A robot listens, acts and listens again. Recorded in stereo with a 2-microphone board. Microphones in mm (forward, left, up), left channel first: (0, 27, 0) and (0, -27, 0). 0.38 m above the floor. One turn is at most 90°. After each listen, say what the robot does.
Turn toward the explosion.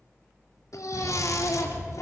Turn 50° right.
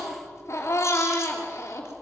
Keep listening.
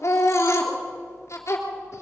I heard an explosion, but can't make it out now. It was about straight ahead or 80° right.